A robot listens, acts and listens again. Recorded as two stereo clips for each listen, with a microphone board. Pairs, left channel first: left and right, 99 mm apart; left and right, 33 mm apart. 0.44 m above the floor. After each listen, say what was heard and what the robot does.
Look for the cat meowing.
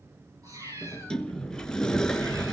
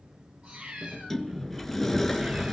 The cat meowing: about 35° right or 145° right. Turn 35° right.
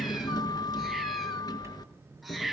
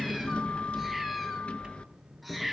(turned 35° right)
Found it: a cat meowing, straight ahead.